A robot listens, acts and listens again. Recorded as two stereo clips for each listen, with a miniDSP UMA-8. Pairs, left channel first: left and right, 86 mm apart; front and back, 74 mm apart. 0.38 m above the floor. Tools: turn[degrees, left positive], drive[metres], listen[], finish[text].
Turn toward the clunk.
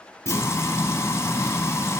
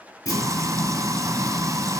Thought: The clunk: 35° left.
Action: turn[35]
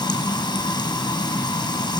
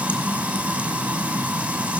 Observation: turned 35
Action: finish[Facing where the clunk came from. I can't hear it now.]